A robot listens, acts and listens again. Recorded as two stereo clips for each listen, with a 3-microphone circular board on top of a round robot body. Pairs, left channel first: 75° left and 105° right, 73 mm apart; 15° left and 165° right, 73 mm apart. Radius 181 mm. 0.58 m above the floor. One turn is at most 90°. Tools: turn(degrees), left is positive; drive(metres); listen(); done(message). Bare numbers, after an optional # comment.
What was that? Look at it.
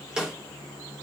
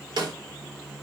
# The snare drum: 175° left.
turn(90)
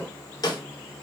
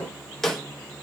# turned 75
# The snare drum is now 100° left.
turn(90)
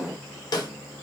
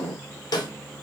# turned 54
# The snare drum is now 45° left.
turn(45)
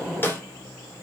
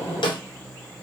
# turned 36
# The snare drum is now 10° left.
turn(10)
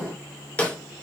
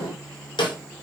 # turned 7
done("Facing the snare drum, 1 to 2 m away.")